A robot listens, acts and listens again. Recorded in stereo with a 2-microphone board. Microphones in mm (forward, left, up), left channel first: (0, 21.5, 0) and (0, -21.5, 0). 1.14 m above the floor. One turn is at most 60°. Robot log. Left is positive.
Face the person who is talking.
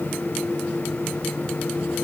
cmd idle
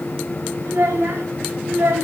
note: The child speaking: about 70° right or 110° right.
cmd yaw -60
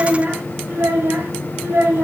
note: So it is at 70° right.
cmd yaw -60
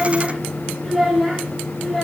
end: Found it: a child speaking, straight ahead.